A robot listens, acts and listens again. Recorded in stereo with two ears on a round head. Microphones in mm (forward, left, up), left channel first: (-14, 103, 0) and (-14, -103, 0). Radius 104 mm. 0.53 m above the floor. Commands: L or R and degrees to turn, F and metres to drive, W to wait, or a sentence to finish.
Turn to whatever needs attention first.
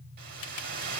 W
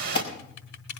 L25
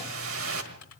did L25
W
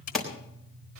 Found it: an alarm, straight ahead, 2 to 4 m away.